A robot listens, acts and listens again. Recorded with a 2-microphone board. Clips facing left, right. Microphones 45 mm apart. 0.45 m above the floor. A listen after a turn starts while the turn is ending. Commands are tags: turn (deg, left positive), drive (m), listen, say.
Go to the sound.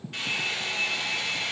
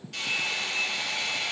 <turn deg="25"/>
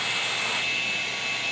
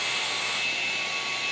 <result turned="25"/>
<turn deg="130"/>
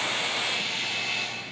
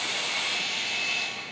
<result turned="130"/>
<drive m="1.0"/>
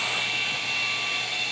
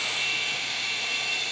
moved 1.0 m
<turn deg="10"/>
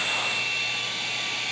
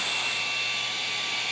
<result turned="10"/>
<drive m="1.0"/>
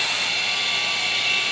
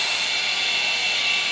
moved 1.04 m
<drive m="1.0"/>
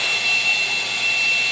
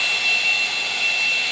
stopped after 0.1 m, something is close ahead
<say>I am next to the hair dryer.</say>